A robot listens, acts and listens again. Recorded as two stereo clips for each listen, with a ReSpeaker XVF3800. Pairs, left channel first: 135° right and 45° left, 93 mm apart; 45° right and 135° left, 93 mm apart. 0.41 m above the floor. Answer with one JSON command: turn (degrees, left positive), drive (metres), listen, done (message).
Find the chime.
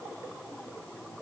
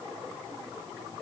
{"listen": true}
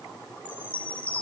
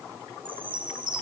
{"turn": 155}
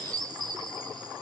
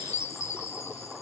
{"turn": 10}
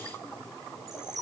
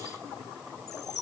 {"done": "Found it: a chime, straight ahead."}